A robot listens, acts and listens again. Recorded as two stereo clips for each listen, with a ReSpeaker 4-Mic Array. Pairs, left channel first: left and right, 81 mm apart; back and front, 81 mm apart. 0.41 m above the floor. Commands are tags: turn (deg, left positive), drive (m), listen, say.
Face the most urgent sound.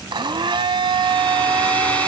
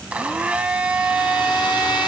<listen/>
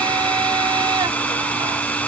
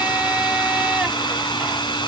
<listen/>
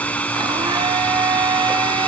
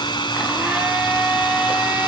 <say>I can't make out anything urgent, only a hair dryer and a blender.</say>